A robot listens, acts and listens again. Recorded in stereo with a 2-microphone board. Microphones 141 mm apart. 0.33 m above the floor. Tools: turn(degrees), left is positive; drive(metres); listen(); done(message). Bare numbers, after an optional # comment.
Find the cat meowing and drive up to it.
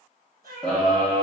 turn(-90)
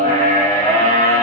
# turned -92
listen()
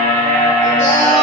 listen()
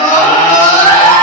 done("I heard a cat meowing from this way, but can't make it out now. I did not reach it.")